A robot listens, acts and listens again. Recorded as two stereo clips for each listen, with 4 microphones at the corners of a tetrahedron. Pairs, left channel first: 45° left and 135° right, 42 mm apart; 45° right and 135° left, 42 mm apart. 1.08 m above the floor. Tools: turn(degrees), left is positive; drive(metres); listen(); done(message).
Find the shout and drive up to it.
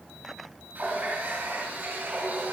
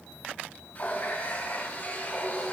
listen()
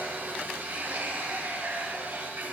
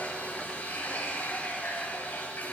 listen()
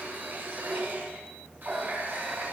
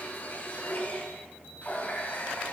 done("I can't make out a shout to turn to.")